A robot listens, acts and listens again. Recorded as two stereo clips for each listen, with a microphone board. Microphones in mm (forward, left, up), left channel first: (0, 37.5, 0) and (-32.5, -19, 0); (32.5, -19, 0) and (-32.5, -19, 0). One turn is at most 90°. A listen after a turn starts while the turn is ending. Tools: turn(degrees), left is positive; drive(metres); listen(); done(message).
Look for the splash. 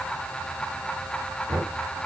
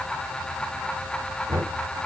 listen()
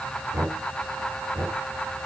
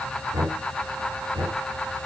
listen()
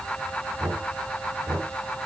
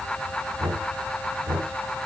done("I can't make out a splash to turn to.")